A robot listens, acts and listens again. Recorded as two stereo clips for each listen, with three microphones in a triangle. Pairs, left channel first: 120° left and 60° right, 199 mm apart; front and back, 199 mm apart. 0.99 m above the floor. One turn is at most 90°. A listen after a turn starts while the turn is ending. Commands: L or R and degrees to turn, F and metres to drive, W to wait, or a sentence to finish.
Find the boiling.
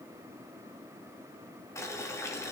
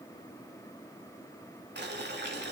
R90
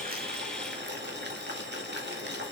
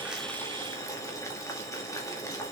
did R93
R70
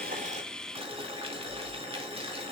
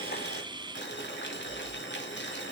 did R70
Facing the boiling, 2 to 4 m away.